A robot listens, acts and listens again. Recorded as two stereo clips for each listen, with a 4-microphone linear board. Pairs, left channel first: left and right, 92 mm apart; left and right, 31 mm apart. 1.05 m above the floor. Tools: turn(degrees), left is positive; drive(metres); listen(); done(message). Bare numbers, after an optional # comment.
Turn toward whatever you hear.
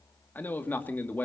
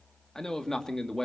# The man speaking: about 20° left or 160° left.
turn(20)
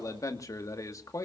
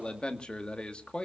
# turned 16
# So it is at 145° left.
turn(145)
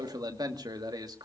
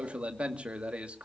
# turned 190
# The man speaking is now 45° right.
turn(-45)
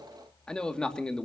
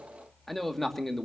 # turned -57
# The man speaking is now 10° left.
turn(10)
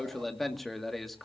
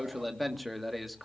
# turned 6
done("Found it: a man speaking, straight ahead.")